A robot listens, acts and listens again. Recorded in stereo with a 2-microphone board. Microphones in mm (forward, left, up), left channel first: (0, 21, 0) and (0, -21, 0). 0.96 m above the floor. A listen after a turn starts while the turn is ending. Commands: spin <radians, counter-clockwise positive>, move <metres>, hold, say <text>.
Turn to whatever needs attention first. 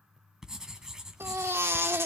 spin -1.57
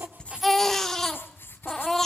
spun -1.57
spin 0.17
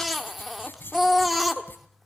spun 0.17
say Found it: a baby crying, straight ahead, 1 to 2 m away.